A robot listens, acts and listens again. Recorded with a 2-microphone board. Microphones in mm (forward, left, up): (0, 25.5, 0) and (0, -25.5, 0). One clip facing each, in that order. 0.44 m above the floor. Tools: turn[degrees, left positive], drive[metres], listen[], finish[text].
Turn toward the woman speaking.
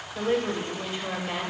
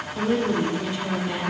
Thought: The woman speaking: about 25° left or 155° left.
Action: turn[25]
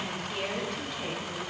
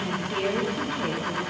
Thought: So it is at 10° right.
Action: turn[-10]
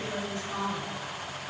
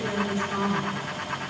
Thought: The woman speaking is now 15° right.
Action: turn[-15]
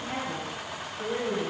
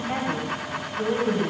Thought: The woman speaking is now 20° right.
Action: turn[-20]
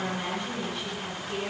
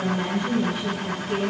Thought: The woman speaking is now 10° right.
Action: turn[-10]
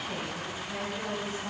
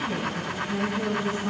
Action: finish[Found it: a woman speaking, straight ahead, 2 to 4 m away.]